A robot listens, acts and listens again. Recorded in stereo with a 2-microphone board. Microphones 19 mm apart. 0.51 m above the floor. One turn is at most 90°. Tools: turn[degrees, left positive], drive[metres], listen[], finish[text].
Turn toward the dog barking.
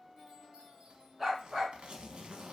Thought: The dog barking: about 15° right or 165° right.
Action: turn[-15]
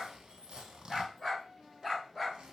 Action: turn[30]
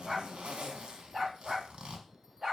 Thought: So it is at 20° right.
Action: turn[-20]
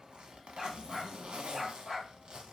Action: finish[Facing the dog barking.]